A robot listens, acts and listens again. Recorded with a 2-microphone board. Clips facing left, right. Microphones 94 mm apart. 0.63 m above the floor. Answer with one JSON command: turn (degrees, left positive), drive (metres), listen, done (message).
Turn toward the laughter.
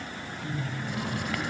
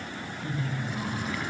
{"turn": -30}
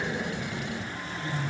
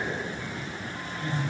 {"turn": -135}
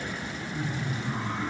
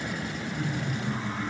{"turn": 15}
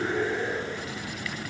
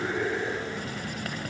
{"done": "Facing the laughter, over 4 m away."}